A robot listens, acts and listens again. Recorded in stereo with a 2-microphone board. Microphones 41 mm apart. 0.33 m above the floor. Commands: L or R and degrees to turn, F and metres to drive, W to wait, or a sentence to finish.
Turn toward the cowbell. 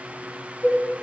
R90
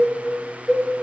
L10
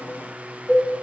Facing the cowbell, 2 to 4 m away.